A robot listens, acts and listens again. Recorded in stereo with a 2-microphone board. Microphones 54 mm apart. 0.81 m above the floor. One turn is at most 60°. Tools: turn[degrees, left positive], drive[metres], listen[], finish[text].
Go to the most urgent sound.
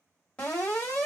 Thought: The alarm: about 25° left or 155° left.
Action: turn[25]
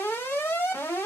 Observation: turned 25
Thought: So it is at 120° left.
Action: turn[60]
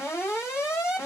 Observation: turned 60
Thought: The alarm is now 60° left.
Action: turn[60]
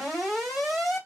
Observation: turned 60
Thought: The alarm is now 10° right.
Action: turn[-10]
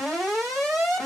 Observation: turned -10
Action: drive[1.0]
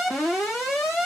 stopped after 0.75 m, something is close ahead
Thought: The alarm is now 10° right.
Action: turn[-10]
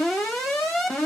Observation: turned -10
Action: finish[I am next to the alarm.]